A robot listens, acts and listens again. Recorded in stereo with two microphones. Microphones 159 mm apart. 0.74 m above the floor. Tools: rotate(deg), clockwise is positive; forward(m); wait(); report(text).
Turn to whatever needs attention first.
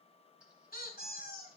wait()
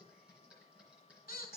wait()
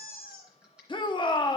rotate(-30)
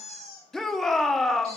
report("Facing the shout.")